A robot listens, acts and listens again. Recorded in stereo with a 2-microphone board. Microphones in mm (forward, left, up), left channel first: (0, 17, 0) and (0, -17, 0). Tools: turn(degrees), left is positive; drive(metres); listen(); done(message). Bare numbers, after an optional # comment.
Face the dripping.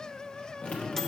# The dripping: about 45° left or 135° left.
turn(45)
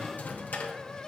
listen()
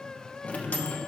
# So it is at 85° left.
turn(85)
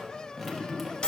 done("Facing the dripping, 1 to 2 m away.")